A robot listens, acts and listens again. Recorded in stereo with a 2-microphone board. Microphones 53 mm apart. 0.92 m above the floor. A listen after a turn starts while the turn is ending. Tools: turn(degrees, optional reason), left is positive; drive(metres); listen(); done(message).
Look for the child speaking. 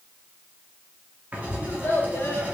turn(degrees=55, reason="The child speaking: about 55° left or 125° left.")
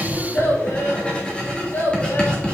turn(degrees=55, reason="So it is at 55° left.")
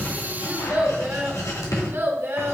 turn(degrees=-45, reason="The child speaking is now 45° right.")
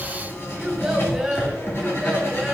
turn(degrees=-10, reason="The child speaking is now 10° right.")
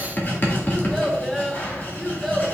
done("Found it: a child speaking, straight ahead, 1 to 2 m away.")